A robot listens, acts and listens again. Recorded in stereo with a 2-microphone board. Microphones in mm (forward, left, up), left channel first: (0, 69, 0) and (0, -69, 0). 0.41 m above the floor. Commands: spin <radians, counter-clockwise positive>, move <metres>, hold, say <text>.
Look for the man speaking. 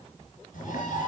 hold
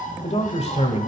spin 0.96
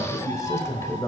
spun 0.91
spin 0.35
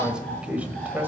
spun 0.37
spin -0.26
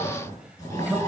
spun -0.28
spin -0.17
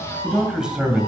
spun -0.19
say Facing the man speaking, 1 to 2 m away.